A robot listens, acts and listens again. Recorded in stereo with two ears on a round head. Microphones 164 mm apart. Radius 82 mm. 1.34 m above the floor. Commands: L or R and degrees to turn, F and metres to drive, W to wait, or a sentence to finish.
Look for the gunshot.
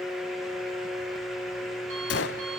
L65
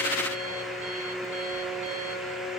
W
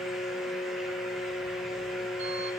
I heard a gunshot, but can't make it out now. It was about straight ahead or 50° left.